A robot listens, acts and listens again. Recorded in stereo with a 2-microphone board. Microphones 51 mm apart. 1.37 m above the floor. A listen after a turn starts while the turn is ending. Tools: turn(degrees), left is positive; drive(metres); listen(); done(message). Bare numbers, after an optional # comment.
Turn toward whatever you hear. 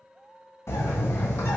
# The bird: about 55° left or 125° left.
turn(55)
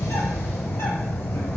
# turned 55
# So it is at 65° left.
turn(65)
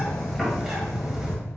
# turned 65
done("Facing the bird, 1 to 2 m away.")